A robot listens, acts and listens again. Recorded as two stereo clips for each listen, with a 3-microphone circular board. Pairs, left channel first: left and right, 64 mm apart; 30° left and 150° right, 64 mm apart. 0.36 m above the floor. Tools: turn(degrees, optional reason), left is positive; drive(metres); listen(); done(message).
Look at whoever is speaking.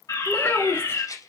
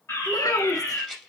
turn(degrees=40, reason="The child speaking: 40° left.")
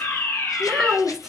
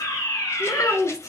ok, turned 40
done("Found it: a child speaking, straight ahead, 2 to 4 m away.")